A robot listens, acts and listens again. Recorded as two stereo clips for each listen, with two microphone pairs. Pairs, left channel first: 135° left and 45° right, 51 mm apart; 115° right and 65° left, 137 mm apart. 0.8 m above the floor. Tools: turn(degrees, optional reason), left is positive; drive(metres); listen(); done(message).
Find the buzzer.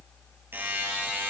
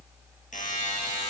turn(degrees=-90, reason="The buzzer: 90° right.")
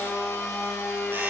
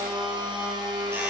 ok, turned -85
listen()
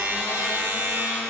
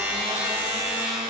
done("Facing the buzzer, over 4 m away.")